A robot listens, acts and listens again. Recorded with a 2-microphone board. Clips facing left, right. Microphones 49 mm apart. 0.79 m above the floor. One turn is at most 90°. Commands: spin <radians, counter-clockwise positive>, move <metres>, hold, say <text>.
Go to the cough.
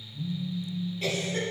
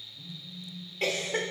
spin -1.13
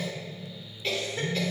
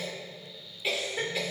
spin -0.17
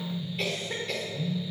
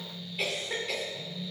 move 1.0
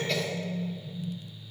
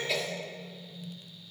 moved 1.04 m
move 1.0
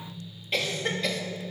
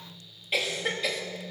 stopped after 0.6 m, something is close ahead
say Arrived at the cough, straight ahead.